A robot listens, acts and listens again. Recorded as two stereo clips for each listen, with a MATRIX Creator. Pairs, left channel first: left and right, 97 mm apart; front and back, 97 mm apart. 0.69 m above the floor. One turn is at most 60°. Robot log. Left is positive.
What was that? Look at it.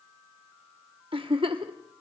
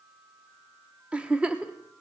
note: The giggle: 105° right.
cmd yaw -60
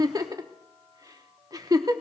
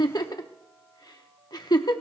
note: The giggle is now 40° right.
cmd yaw -40
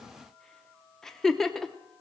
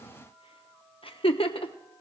end: Facing the giggle, under 1 m away.